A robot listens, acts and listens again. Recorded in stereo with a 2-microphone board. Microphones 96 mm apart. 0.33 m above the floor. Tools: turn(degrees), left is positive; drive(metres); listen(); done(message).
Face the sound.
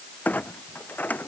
turn(degrees=15)
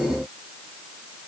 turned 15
listen()
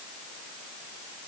done("I heard a clunk, but can't make it out now. It was about straight ahead or 150° left.")